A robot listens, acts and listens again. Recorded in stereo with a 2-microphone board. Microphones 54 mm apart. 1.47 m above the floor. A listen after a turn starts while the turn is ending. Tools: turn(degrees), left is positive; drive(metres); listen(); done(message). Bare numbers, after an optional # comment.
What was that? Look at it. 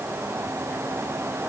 listen()
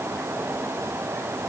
listen()
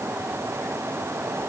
done("I can't make out anything.")